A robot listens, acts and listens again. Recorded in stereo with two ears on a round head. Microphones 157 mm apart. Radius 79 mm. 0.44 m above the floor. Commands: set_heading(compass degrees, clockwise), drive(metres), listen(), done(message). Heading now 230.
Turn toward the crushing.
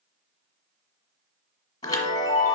listen()
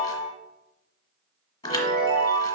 listen()
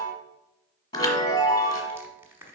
set_heading(260)
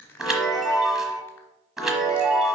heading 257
set_heading(242)
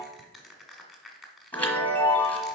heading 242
done("Found it: crushing, straight ahead, 1 to 2 m away.")